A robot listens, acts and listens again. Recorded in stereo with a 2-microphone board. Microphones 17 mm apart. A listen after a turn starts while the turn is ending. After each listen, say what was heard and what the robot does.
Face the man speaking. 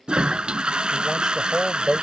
The man speaking: about 35° right or 145° right. Turn 35° right.
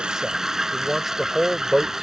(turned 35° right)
So it is at 20° right. Turn 20° right.
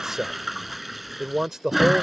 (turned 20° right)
The man speaking is now 25° right. Turn 25° right.
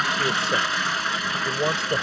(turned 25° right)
The man speaking is now 40° right. Turn 40° right.
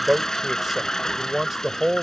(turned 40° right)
The man speaking is now 15° right. Turn 15° right.
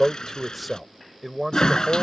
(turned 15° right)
Found it: a man speaking, straight ahead.